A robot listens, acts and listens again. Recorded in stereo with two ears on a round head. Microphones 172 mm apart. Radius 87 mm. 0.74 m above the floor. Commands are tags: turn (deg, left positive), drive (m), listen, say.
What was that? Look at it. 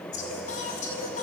<turn deg="40"/>
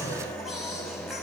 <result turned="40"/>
<say>Found it: singing, straight ahead, over 4 m away.</say>